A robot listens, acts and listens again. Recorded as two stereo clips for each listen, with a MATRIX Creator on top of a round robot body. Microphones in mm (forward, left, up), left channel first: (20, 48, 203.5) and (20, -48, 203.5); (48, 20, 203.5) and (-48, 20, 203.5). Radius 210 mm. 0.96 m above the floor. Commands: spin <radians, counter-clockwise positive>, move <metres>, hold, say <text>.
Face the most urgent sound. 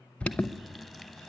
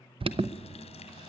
spin 2.88
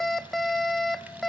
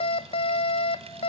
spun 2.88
say Facing the alarm.